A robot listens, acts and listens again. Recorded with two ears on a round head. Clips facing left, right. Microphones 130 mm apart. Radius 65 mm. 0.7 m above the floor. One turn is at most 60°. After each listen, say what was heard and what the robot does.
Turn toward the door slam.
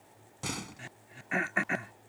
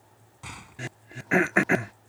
The door slam: about 55° left or 125° left. Turn 55° left.
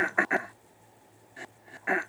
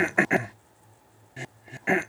Keep listening.
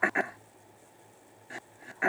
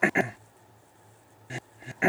I heard a door slam, but can't make it out now. It was about straight ahead or 70° left.